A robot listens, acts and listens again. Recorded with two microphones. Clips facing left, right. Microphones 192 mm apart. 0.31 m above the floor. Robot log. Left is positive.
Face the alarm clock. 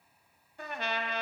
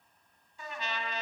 cmd idle
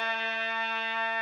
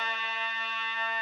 cmd idle
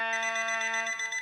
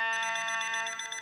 note: The alarm clock: about 60° right or 120° right.
cmd yaw -60
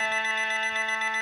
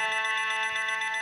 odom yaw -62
cmd idle
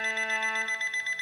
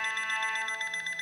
note: So it is at 50° right.
cmd yaw -50
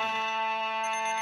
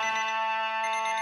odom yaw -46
cmd idle
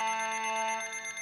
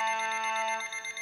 end: Facing the alarm clock.